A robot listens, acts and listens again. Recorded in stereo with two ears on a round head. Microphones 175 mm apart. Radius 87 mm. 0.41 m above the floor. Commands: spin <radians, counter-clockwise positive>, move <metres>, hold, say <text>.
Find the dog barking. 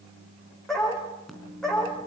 spin 0.52
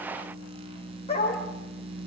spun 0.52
spin 2.62
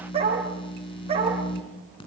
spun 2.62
spin -0.52
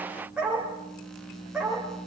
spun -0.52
say Found it: a dog barking, straight ahead, over 4 m away.